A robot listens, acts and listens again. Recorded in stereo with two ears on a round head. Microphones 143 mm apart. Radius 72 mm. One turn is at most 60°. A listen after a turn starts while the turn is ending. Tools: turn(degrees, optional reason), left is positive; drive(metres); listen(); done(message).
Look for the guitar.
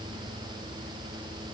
listen()
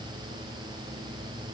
listen()
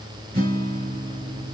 turn(degrees=-55, reason="The guitar: about 55° right or 125° right.")
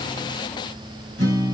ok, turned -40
turn(degrees=-60, reason="So it is at 85° right.")
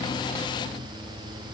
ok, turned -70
turn(degrees=-15, reason="Nothing new. It was at 15° right.")
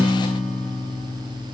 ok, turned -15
done("Facing the guitar.")